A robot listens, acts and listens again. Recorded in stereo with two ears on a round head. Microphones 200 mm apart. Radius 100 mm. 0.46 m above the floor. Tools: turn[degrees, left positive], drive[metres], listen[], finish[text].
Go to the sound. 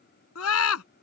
Thought: The scream: about 70° left or 110° left.
Action: turn[70]
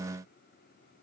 Action: listen[]
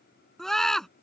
Action: drive[1.0]
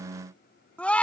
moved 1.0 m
Action: drive[1.0]
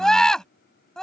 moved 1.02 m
Action: drive[1.0]
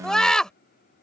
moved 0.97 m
Action: drive[1.0]
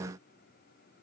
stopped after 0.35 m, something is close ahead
Action: listen[]
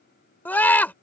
Thought: The scream is now 10° left.
Action: turn[10]
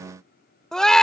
Action: finish[I am next to the scream.]